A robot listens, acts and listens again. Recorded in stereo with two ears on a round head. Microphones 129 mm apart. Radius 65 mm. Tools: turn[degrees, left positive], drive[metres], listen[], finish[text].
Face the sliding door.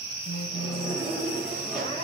Action: turn[30]
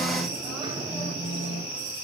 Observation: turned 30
Thought: So it is at 30° right.
Action: turn[-30]
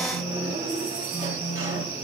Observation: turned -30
Thought: The sliding door is now 15° right.
Action: turn[-15]
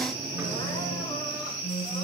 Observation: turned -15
Action: listen[]
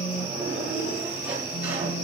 Thought: The sliding door is now 10° right.
Action: turn[-10]
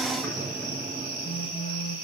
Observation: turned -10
Action: finish[Found it: a sliding door, straight ahead, over 4 m away.]